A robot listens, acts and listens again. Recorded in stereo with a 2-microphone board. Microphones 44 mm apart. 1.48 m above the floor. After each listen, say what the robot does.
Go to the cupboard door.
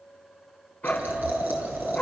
Keep listening.
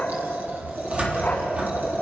Turn 25° right.
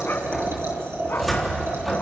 Drive 1.0 m forward.
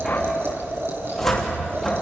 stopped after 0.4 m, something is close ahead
Blocked. The cupboard door is further on, straight ahead.